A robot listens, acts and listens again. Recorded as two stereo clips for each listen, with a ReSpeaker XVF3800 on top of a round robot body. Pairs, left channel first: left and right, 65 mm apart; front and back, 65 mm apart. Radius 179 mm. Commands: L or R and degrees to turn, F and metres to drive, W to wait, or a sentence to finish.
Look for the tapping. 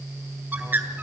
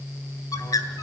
W
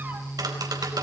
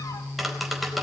R90
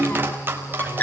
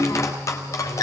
R35
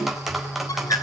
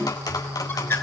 Found it: tapping, straight ahead, over 4 m away.